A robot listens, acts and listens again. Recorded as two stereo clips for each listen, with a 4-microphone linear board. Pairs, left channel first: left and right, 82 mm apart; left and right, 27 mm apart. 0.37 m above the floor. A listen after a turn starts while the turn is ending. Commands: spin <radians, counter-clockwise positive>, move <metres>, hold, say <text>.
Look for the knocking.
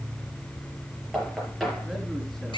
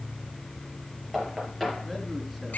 spin 0.52
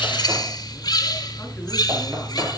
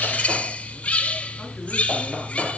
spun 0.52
hold
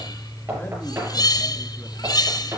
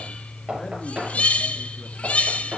spin -0.52
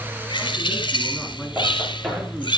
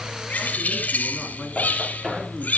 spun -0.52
say Found it: knocking, straight ahead, over 4 m away.